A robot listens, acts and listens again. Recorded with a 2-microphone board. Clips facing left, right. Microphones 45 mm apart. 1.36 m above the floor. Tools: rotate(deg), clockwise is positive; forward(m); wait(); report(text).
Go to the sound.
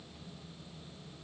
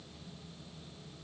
wait()
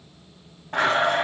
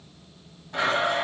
rotate(-50)
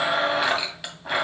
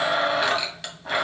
rotate(-10)
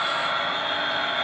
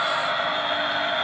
forward(1.0)
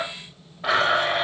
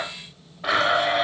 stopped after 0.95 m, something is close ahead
report("Arrived at the blender, straight ahead.")